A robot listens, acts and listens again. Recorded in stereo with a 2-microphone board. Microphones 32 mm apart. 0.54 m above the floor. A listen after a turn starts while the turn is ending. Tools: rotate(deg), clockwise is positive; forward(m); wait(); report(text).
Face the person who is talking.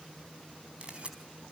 wait()
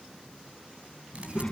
rotate(-25)
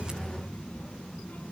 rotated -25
rotate(-130)
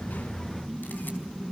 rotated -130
rotate(-15)
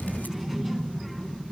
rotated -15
report("Facing the child speaking.")